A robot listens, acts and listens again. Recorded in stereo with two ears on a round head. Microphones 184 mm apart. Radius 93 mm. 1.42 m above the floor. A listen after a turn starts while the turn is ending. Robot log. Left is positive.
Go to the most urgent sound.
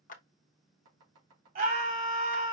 note: The scream: about 45° right or 135° right.
cmd yaw -45
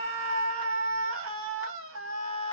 note: So it is at 90° right.
cmd yaw -90
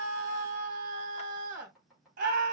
note: The scream is now 40° right.
cmd yaw -40
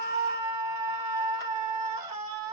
note: The scream is now 20° right.
cmd yaw -20
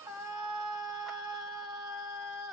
cmd fwd 1.0
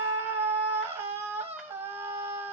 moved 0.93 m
note: The scream is now 10° right.
cmd yaw -10
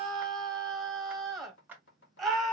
cmd fwd 1.0
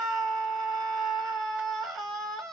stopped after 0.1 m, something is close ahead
end: I am next to the scream.